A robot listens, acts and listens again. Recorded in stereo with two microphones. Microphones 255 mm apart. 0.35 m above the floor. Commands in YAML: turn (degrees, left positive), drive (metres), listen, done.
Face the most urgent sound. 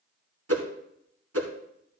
listen: true
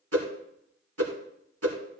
listen: true
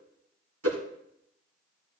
done: "I can't make out anything urgent, only a whoosh."